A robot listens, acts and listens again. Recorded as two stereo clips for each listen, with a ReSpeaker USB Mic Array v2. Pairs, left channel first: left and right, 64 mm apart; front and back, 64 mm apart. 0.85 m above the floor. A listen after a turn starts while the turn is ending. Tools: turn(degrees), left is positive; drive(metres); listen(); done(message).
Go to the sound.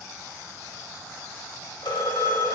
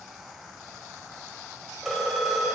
turn(degrees=90)
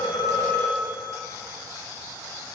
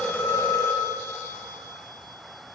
turn(degrees=45)
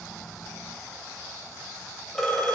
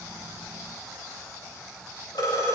drive(metres=1.0)
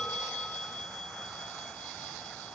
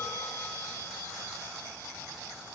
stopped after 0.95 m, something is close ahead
turn(degrees=10)
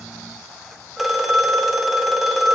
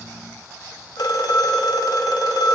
done("Arrived at the phone ringing, straight ahead.")